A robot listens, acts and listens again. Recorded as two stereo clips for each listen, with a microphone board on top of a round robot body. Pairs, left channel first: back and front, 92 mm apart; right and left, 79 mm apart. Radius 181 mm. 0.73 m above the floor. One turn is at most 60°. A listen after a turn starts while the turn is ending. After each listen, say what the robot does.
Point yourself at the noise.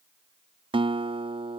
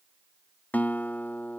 Turn 20° right.
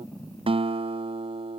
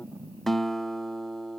Facing the guitar.